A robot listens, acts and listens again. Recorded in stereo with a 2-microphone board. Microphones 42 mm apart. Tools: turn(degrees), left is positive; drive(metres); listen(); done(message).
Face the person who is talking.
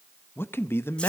turn(degrees=70)
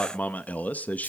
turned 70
turn(degrees=40)
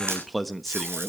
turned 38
done("Found it: a man speaking, straight ahead.")